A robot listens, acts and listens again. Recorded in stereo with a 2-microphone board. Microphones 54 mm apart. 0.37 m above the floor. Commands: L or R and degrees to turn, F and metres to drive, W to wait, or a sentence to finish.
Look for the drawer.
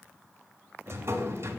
R55
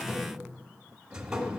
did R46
R15
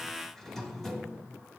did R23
Facing the drawer.